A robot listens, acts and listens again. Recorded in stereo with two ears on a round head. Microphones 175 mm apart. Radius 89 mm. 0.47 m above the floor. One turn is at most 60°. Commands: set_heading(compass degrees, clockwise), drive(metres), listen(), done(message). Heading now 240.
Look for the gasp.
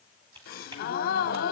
set_heading(190)
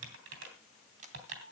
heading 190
listen()
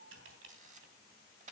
done("I heard a gasp, but can't make it out now. It was about straight ahead or 80° left.")